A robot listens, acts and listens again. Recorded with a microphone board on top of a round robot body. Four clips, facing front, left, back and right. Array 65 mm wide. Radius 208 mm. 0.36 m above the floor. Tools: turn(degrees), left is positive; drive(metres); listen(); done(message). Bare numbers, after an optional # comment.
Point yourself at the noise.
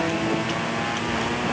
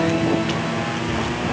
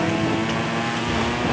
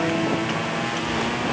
listen()
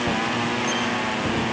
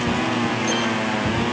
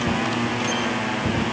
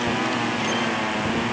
listen()
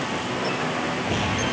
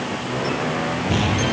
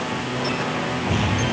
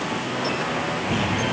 done("I can't make out anything to turn to.")